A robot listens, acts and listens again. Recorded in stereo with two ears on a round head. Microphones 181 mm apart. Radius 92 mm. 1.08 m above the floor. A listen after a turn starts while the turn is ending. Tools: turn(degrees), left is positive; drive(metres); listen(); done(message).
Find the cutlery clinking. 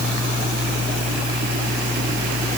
listen()
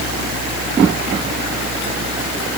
listen()
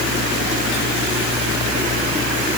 done("I can't make out cutlery clinking.")